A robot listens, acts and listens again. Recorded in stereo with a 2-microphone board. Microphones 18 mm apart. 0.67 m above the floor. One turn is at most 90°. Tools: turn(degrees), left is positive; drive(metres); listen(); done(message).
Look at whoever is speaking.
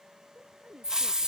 turn(degrees=-90)
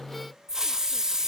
listen()
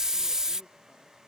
listen()
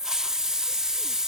done("Facing where the woman speaking came from. I can't hear it now.")